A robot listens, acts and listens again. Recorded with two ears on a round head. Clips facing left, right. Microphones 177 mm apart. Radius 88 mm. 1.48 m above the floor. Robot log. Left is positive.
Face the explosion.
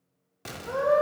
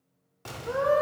note: The explosion: about 20° left or 160° left.
cmd yaw +20
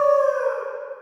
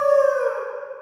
cmd idle
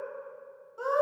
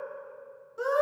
end: I heard an explosion, but can't make it out now. It was about straight ahead or 140° left.